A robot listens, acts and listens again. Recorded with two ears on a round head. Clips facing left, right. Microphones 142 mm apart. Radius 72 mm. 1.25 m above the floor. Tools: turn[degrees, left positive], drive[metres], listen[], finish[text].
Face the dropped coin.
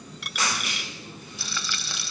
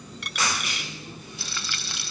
Action: turn[30]
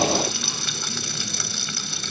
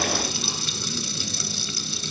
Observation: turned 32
Action: listen[]
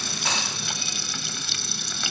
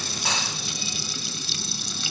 Action: finish[I heard a dropped coin, but can't make it out now. It was about 30° right or 145° left.]